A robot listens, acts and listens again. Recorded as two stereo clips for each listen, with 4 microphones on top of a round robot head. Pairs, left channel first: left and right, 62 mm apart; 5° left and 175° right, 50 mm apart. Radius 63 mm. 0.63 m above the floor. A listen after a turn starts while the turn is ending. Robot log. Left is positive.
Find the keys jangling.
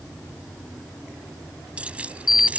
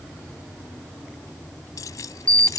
note: The keys jangling: 20° right.
cmd yaw -20
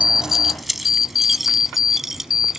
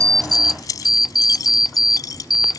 end: Found it: keys jangling, straight ahead.